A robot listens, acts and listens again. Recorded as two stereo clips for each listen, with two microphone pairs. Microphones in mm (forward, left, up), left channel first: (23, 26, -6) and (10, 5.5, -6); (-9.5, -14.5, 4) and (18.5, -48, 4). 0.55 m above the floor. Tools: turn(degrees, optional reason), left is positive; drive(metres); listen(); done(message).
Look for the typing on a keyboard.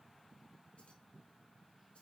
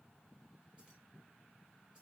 listen()
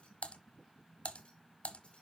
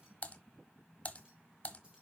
turn(degrees=75, reason="The typing on a keyboard: 75° left.")
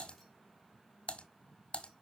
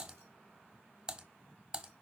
turn(degrees=15, reason="The typing on a keyboard is now 15° left.")
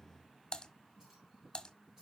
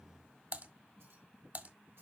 done("Facing the typing on a keyboard.")